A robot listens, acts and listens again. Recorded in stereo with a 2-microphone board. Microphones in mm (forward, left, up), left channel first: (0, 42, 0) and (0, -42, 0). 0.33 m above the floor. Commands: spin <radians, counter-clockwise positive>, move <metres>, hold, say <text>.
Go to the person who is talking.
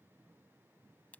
hold
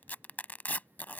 hold
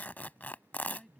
spin 0.52
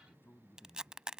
spin 2.62
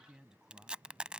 spin -0.17
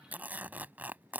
hold
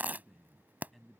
move 1.0
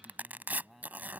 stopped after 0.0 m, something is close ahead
say Something is in my way. I am facing the man speaking but have not reached it.